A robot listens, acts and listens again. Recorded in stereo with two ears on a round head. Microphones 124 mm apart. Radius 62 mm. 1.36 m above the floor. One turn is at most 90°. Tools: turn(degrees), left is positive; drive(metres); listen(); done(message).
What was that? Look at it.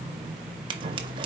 turn(degrees=-35)
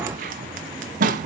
turn(degrees=-90)
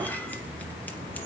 turn(degrees=-15)
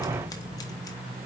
listen()
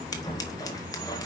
turn(degrees=30)
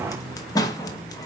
turn(degrees=30)
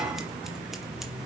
listen()
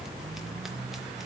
listen()
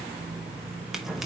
done("Found it: scissors, straight ahead, 1 to 2 m away.")